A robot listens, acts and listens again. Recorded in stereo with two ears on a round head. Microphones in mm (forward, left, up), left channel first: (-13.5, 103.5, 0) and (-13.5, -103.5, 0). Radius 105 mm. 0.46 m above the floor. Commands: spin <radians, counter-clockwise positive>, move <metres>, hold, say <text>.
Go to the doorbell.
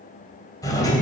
spin 0.26
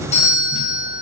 spin 2.62
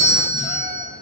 spin -0.35
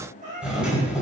move 1.0
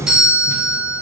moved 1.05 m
move 1.0
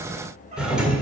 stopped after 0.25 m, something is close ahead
say Arrived at the doorbell, straight ahead.